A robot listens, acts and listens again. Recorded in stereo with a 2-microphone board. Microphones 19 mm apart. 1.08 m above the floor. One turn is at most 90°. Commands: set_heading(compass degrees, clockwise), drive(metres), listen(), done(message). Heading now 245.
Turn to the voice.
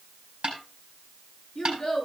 set_heading(220)
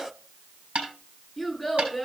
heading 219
done("Facing the child speaking.")